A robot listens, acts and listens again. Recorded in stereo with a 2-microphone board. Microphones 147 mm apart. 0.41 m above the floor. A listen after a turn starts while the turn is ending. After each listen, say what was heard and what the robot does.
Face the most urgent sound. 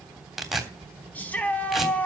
Turn 30° left.
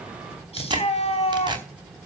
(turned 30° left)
So it is at 140° left. Turn 140° left.
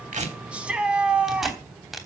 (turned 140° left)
Found it: a shout, straight ahead.